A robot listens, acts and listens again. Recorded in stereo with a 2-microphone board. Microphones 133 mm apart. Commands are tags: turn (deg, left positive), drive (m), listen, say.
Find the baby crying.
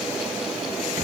<listen/>
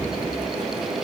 <listen/>
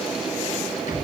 <say>I can't make out a baby crying, only a rattle.</say>